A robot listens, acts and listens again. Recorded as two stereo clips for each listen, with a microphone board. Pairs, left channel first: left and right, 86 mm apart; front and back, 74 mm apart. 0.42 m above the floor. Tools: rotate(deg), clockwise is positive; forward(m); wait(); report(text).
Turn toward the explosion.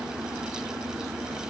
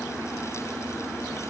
wait()
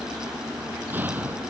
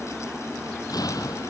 rotate(25)
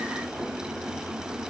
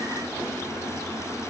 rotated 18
report("Facing where the explosion came from. I can't hear it now.")